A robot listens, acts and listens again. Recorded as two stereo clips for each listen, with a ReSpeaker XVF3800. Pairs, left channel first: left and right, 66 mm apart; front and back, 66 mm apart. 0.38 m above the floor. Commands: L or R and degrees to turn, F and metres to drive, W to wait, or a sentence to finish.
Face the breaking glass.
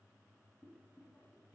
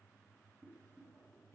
W
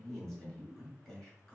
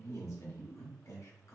W
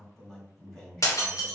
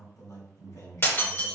L50
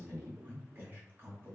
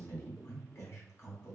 I heard breaking glass from this way, but can't make it out now.